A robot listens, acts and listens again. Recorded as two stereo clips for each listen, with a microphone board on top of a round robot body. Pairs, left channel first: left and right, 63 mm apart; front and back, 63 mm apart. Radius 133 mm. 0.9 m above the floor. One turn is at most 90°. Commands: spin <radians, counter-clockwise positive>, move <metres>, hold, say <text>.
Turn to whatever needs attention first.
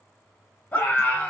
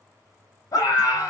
spin 0.44
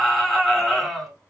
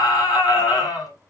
say Facing the scream, 2 to 4 m away.